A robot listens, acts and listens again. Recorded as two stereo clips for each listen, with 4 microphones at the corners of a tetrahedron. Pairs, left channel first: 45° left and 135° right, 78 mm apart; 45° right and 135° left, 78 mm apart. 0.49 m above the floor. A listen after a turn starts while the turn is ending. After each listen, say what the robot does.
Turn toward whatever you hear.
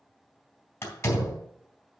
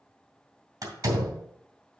Turn 95° left.
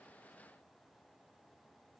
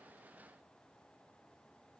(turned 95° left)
I heard a door slam from this way, but can't make it out now.